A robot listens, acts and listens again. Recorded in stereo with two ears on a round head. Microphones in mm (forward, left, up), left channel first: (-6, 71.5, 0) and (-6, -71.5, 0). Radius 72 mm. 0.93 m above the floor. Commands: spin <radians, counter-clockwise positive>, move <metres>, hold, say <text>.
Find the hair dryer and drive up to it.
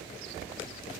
hold
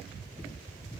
hold
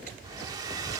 spin -0.44
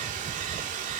spin -2.18
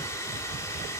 spin 0.35
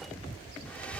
spin 0.17
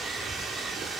move 1.0
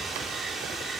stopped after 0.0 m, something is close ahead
say Blocked. The hair dryer is further on, straight ahead.